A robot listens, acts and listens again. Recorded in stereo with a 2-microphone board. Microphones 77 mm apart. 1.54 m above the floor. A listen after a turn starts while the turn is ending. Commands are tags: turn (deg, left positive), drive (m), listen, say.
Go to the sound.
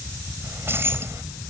<turn deg="-30"/>
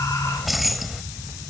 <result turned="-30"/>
<drive m="1.0"/>
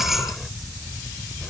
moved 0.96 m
<drive m="1.0"/>
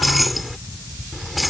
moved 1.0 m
<drive m="1.0"/>
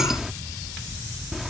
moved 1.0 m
<drive m="1.0"/>
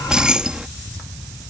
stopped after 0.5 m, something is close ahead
<turn deg="-10"/>
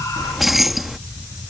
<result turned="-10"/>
<say>Arrived at the keys jangling, straight ahead.</say>